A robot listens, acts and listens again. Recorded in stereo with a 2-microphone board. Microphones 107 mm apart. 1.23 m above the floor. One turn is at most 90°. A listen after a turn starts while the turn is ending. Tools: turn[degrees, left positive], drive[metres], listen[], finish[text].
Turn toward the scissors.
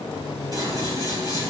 Thought: The scissors: about 35° right or 145° right.
Action: turn[-35]
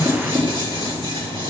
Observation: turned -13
Thought: So it is at 130° right.
Action: turn[-90]
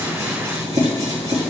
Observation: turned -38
Thought: The scissors is now 90° right.
Action: turn[-90]
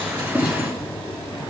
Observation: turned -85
Action: finish[Facing the scissors, 2 to 4 m away.]